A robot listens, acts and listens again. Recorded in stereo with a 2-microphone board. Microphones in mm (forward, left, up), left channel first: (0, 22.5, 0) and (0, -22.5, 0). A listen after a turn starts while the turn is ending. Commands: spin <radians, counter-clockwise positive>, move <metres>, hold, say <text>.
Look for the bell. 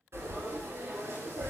hold
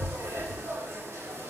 hold
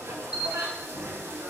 spin -0.35
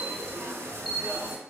say Facing the bell.